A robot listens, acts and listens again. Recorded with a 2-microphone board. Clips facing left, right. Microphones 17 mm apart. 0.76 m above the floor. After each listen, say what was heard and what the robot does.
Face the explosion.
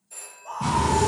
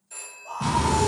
The explosion: about 30° right or 150° right. Turn 30° right.
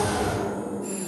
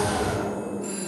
Found it: an explosion, straight ahead, 1 to 2 m away.